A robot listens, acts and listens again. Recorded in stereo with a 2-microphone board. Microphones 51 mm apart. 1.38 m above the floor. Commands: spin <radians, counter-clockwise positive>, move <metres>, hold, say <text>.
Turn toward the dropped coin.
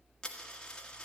spin 0.26
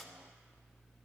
say Found it: a dropped coin, straight ahead, 1 to 2 m away.